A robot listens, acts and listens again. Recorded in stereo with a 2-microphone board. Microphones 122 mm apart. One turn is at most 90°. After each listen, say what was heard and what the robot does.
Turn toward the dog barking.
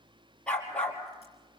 Turn 30° left.
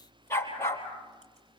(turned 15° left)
So it is at 160° left. Turn 90° left.
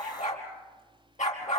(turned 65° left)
The dog barking is now 90° left. Turn 90° left.
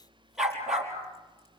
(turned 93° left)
Found it: a dog barking, straight ahead.